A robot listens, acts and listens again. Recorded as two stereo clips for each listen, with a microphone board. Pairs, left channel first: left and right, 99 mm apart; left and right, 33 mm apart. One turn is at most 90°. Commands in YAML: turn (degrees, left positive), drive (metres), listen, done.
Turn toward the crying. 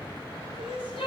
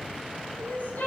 turn: 70
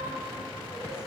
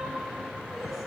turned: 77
listen: true
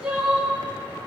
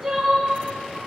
turn: -10
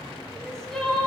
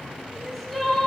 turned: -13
done: "Facing the crying, under 1 m away."